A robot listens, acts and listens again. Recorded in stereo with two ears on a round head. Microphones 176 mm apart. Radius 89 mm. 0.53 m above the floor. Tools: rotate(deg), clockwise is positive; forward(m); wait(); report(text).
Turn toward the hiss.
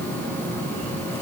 wait()
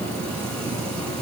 wait()
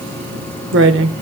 report("I can't make out a hiss to turn to.")